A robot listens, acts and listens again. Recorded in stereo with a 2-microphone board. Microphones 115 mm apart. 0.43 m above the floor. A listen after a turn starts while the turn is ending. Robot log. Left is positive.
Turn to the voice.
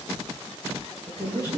note: The woman speaking: about 30° left or 150° left.
cmd yaw +30
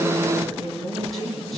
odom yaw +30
end: Facing the woman speaking.